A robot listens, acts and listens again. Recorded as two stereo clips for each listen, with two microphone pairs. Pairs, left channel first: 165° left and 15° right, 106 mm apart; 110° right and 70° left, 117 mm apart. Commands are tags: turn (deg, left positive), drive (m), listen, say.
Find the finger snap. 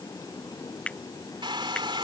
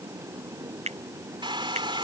<turn deg="85"/>
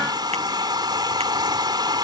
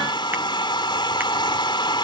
<listen/>
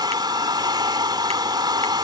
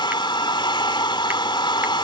<listen/>
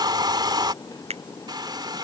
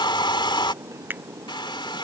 <say>Facing the finger snap.</say>